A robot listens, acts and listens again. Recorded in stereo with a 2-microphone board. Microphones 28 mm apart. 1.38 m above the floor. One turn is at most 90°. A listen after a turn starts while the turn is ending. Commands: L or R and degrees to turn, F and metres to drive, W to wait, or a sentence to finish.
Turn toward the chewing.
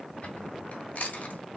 L70
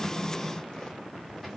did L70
W
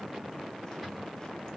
W
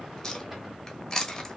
L25
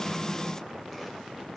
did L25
W
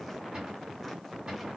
W
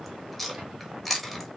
Facing the chewing.